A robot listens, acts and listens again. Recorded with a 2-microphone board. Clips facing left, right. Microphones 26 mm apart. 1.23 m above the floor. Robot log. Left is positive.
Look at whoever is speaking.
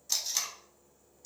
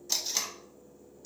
cmd idle
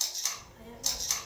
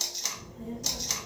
note: The child speaking: about 70° left or 110° left.
cmd yaw +70
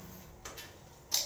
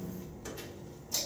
note: So it is at 10° left.
cmd yaw +10
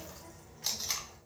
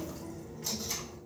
end: Found it: a child speaking, straight ahead, 1 to 2 m away.